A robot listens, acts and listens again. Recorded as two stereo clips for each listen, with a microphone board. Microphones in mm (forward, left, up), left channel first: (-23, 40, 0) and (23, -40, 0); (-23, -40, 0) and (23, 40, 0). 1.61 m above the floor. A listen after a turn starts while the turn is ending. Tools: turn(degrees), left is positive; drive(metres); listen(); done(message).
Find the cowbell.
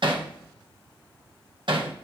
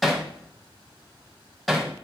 listen()
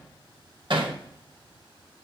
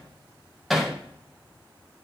listen()
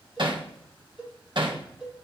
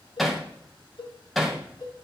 turn(degrees=-140)
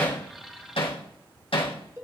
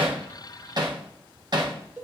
turn(degrees=-10)
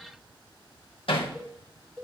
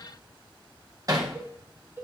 done("Facing the cowbell.")